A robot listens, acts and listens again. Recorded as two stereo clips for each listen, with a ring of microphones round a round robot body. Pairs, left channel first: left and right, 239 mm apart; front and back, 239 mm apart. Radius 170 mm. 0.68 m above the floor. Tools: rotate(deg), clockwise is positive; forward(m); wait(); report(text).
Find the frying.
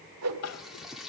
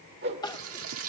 rotate(-180)
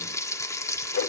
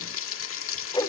rotate(-15)
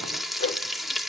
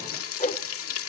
report("Found it: frying, straight ahead.")